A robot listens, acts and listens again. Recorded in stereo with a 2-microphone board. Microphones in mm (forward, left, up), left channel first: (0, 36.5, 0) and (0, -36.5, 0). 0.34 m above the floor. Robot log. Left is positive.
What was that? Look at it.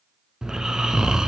cmd yaw -30
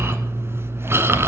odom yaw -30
note: So it is at 145° right.
cmd yaw -145
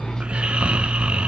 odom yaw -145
note: The snoring is now 15° right.
cmd yaw -15
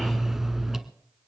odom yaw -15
end: Found it: snoring, straight ahead.